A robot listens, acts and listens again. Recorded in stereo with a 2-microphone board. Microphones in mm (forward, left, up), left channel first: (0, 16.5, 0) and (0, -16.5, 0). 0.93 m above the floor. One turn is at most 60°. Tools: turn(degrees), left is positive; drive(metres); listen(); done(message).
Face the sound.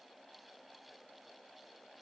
listen()
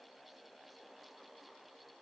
listen()
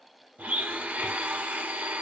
turn(degrees=-60)
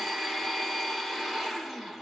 done("Facing the blender.")